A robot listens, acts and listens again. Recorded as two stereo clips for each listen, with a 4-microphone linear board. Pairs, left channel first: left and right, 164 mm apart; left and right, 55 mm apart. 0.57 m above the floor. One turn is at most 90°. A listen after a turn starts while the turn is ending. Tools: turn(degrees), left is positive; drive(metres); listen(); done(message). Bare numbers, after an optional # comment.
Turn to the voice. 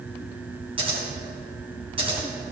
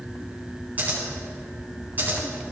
listen()
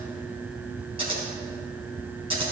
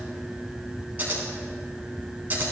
listen()
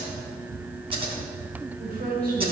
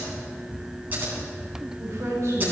# The woman speaking: about 70° right or 110° right.
turn(-70)
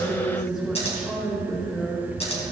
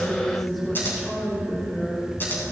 done("Facing the woman speaking, 2 to 4 m away.")